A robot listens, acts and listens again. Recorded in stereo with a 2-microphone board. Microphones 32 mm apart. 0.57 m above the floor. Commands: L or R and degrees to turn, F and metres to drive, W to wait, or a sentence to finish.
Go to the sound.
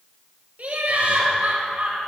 R55
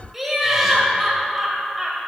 F1.0
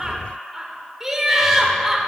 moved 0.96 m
R10
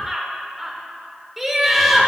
F1.0
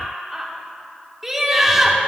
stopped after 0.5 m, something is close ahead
R10
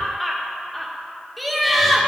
Arrived at the laughter, straight ahead.